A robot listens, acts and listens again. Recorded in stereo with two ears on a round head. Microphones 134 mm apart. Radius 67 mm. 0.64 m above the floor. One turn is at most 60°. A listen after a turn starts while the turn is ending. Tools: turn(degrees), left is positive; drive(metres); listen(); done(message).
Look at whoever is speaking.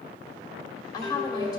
turn(degrees=25)
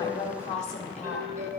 turn(degrees=60)
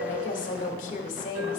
turn(degrees=60)
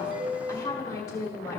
turn(degrees=25)
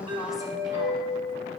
listen()
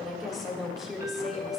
done("Facing the woman speaking, 1 to 2 m away.")